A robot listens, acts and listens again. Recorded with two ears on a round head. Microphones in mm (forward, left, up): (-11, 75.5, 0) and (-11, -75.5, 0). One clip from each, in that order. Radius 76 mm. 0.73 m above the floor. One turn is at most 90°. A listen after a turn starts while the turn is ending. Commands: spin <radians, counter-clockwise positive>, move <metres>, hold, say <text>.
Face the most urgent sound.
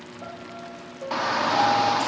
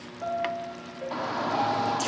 spin 0.96
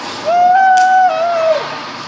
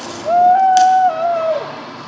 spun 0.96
spin 0.87
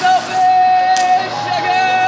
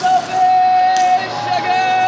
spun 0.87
say Found it: a shout, straight ahead, 1 to 2 m away.